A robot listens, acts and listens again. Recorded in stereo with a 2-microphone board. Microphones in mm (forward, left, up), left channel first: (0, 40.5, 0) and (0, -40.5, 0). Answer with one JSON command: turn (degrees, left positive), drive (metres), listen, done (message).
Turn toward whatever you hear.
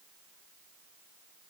{"listen": true}
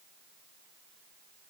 {"listen": true}
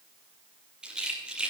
{"turn": -30}
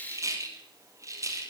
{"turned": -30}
{"turn": -140}
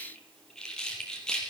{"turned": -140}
{"turn": 10}
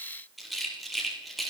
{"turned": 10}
{"done": "Facing the rattle."}